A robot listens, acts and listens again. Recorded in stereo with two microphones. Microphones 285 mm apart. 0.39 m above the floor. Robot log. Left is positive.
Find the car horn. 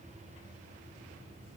cmd idle
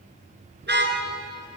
note: The car horn: about 35° right or 145° right.
cmd yaw -35
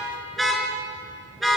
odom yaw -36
end: Facing the car horn.